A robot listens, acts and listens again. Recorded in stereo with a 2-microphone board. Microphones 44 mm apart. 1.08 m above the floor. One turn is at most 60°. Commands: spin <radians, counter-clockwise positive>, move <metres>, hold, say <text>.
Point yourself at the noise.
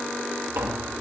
spin -1.05
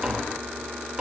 spin -0.35
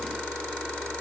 hold
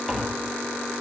say Found it: tapping, straight ahead.